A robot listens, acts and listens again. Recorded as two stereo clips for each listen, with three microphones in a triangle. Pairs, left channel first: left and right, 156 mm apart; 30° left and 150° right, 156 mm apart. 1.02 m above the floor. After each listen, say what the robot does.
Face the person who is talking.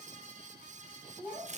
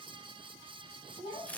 Turn 15° right.
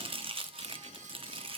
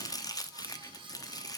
Keep listening.
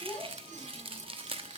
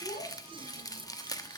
Found it: a child speaking, straight ahead, over 4 m away.